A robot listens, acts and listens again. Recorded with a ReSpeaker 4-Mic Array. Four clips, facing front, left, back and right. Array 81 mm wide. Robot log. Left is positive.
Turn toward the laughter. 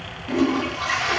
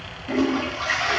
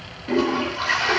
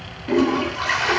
cmd idle
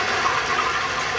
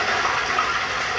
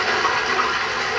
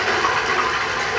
cmd idle
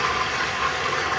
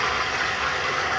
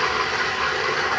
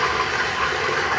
end: I can't make out laughter, only a toilet flushing.